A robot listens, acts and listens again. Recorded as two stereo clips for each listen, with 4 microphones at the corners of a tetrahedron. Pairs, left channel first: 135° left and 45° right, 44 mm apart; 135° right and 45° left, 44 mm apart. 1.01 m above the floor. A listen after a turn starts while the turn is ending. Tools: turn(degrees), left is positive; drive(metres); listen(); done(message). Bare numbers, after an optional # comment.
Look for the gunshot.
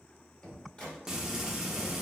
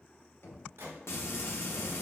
# The gunshot: 70° left.
turn(70)
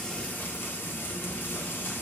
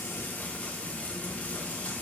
done("I heard a gunshot from this way, but can't make it out now.")